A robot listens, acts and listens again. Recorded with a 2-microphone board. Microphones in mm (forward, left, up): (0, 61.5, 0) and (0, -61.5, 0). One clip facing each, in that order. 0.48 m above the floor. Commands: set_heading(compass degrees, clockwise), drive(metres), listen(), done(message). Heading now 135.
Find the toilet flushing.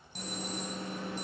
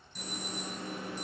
listen()
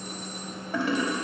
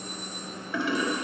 set_heading(95)
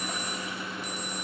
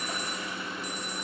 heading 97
listen()
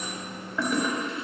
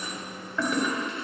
done("Found it: a toilet flushing, straight ahead, 1 to 2 m away.")